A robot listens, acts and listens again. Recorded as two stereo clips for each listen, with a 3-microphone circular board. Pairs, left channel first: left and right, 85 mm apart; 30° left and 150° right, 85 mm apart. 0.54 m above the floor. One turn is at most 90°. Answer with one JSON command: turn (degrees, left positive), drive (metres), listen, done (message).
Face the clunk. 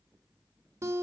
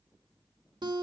{"listen": true}
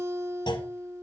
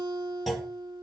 {"turn": 90}
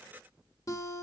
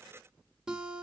{"turn": 30}
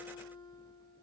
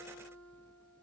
{"done": "I heard a clunk from this way, but can't make it out now."}